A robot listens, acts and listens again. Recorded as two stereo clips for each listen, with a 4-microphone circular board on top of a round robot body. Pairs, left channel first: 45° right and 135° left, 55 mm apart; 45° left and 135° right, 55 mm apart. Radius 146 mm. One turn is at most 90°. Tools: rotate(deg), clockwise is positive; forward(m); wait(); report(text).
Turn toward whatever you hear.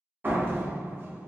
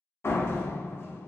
rotate(-85)
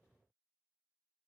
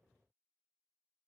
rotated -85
report("I heard a door slam from this way, but can't make it out now.")